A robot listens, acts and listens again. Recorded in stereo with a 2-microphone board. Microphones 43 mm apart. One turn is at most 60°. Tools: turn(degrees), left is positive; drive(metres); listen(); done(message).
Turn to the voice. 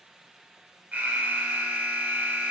listen()
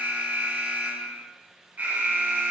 listen()
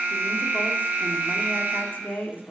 turn(degrees=50)
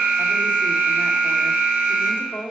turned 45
turn(degrees=60)
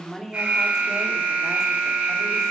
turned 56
turn(degrees=15)
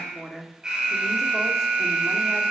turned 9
done("Found it: a woman speaking, straight ahead, 1 to 2 m away.")